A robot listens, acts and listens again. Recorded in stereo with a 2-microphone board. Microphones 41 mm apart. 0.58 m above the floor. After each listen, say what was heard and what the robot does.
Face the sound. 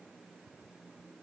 Keep listening.
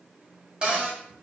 The cupboard door: about 25° right or 155° right. Turn 25° right.
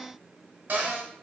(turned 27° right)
So it is at 130° right. Turn 130° right.
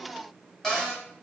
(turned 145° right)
The cupboard door is now 15° left. Turn 15° left.
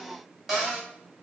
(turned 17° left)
Facing the cupboard door.